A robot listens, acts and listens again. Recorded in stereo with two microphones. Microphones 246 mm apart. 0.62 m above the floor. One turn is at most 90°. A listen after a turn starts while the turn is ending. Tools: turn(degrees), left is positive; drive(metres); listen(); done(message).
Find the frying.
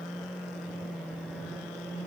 listen()
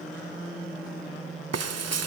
turn(degrees=-75)
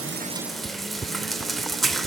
done("Found it: frying, straight ahead.")